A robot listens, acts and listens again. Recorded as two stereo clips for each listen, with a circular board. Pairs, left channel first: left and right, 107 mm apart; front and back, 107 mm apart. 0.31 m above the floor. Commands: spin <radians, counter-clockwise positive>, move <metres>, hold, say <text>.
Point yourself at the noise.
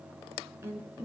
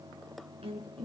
spin -2.71
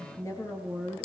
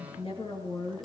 spin 0.52
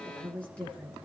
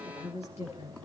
spin 0.17
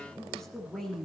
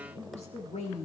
say Facing the woman speaking.